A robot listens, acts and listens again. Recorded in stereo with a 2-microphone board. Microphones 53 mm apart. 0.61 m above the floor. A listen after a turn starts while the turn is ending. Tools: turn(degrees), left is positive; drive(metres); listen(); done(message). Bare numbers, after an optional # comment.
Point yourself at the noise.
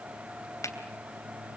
# The finger snap: about 75° left or 105° left.
turn(75)
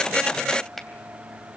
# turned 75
done("Found it: a finger snap, straight ahead.")